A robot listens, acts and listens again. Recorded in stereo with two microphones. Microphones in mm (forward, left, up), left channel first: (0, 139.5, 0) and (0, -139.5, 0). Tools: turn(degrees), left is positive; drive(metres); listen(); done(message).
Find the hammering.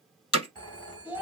turn(degrees=55)
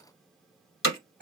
turn(degrees=65)
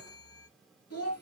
listen()
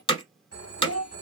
turn(degrees=20)
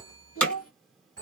done("Found it: hammering, straight ahead.")